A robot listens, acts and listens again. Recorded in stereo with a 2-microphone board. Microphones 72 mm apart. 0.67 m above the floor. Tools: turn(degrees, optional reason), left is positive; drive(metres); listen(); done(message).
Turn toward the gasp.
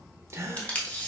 turn(degrees=-35, reason="The gasp: about 35° right or 145° right.")
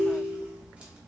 listen()
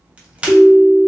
done("I heard a gasp, but can't make it out now. It was about straight ahead or 110° right.")